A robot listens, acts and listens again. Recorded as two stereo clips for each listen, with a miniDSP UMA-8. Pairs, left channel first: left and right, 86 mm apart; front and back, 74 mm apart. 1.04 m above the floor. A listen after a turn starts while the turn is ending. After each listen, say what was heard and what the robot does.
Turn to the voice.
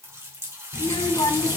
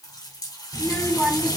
The child speaking: 80° left. Turn 80° left.
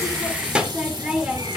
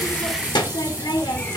The child speaking is now 10° right. Turn 10° right.
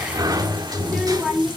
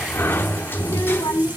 Found it: a child speaking, straight ahead, 1 to 2 m away.